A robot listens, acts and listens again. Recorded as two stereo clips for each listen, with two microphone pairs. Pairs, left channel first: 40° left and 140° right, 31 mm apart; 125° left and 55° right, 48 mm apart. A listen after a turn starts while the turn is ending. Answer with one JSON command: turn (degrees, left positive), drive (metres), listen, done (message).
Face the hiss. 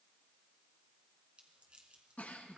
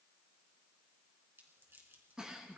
{"listen": true}
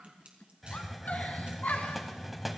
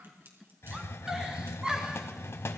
{"turn": 135}
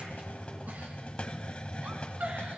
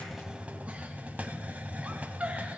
{"done": "Found it: a hiss, straight ahead."}